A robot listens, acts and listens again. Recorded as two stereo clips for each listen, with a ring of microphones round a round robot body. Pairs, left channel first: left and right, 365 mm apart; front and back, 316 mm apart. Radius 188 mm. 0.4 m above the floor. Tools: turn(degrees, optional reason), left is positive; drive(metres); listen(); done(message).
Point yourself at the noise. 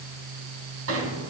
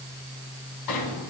turn(degrees=-35, reason="The sliding door: 35° right.")
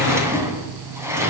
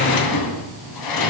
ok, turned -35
done("Found it: a sliding door, straight ahead.")